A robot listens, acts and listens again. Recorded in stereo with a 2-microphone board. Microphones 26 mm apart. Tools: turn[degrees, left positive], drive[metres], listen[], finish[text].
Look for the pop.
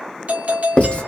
Action: listen[]
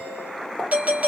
Thought: The pop: about 65° left or 115° left.
Action: turn[65]
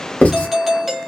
Action: listen[]
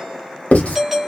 Action: finish[I heard a pop, but can't make it out now. It was about straight ahead or 50° left.]